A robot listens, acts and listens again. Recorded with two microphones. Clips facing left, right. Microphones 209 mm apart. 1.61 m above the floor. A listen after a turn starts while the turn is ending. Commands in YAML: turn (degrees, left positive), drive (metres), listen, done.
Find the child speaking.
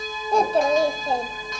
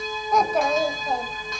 turn: 30
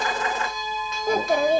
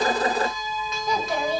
turn: 110
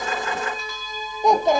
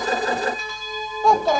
turn: 20
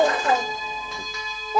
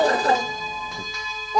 done: "Found it: a child speaking, straight ahead, 1 to 2 m away."